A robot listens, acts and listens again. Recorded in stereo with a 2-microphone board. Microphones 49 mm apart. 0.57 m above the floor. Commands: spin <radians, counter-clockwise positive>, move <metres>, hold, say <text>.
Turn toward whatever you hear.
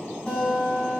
spin 0.35
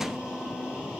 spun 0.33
hold
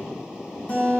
spin 2.53
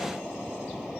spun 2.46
hold
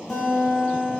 say Found it: a guitar, straight ahead, 2 to 4 m away.